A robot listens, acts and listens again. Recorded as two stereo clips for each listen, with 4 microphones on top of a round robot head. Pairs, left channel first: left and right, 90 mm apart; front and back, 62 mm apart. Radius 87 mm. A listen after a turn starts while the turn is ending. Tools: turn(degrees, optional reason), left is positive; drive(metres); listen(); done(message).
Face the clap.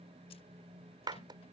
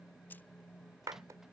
turn(degrees=-135, reason="The clap: 135° right.")
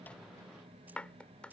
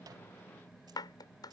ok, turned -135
turn(degrees=10, reason="The clap is now 10° left.")
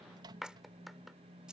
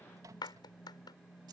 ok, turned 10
done("Found it: a clap, straight ahead.")